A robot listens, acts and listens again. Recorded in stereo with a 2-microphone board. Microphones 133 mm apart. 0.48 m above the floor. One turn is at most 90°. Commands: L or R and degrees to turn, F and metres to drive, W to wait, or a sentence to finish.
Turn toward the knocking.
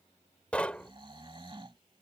L30
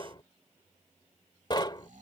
L90
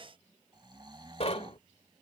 L65
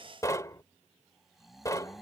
L30
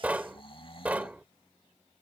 R15
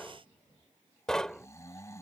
Found it: knocking, straight ahead.